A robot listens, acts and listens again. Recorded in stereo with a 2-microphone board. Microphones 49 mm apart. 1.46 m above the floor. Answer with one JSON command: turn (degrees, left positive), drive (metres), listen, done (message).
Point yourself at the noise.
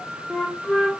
{"turn": 30}
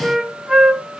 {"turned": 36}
{"done": "Found it: a flute, straight ahead, under 1 m away."}